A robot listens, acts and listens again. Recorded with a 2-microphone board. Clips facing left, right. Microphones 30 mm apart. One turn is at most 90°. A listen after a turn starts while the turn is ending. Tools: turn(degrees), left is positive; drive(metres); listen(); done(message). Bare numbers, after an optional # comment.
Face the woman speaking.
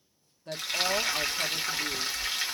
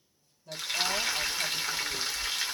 # The woman speaking: about 55° left or 125° left.
turn(55)
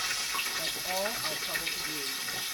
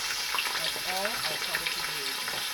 listen()
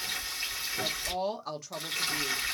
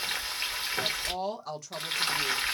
# So it is at 10° left.
turn(10)
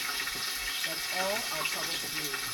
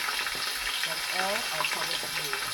listen()
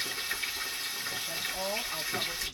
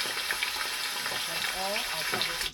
done("Facing the woman speaking.")